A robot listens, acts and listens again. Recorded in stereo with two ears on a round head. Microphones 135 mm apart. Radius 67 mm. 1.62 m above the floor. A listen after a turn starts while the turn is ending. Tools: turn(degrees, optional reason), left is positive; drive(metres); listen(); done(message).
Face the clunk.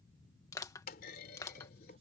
turn(degrees=60, reason="The clunk: about 60° left or 120° left.")
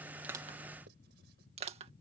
listen()
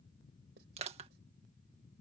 done("I heard a clunk, but can't make it out now. It was about straight ahead or 60° left.")